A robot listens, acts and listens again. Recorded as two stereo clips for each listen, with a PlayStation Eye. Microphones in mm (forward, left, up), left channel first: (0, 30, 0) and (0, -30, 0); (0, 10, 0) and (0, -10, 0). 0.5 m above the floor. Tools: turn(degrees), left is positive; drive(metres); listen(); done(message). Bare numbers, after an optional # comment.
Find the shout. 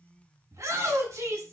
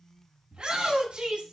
# The shout: about 60° right or 120° right.
turn(-60)
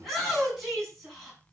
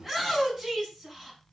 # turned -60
done("Facing the shout, over 4 m away.")